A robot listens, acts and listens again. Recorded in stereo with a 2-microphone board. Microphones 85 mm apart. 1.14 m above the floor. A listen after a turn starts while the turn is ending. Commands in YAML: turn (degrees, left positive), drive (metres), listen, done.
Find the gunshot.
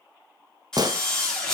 turn: -55
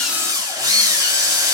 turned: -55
listen: true
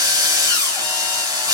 done: "I heard a gunshot, but can't make it out now. It was about straight ahead or 70° right."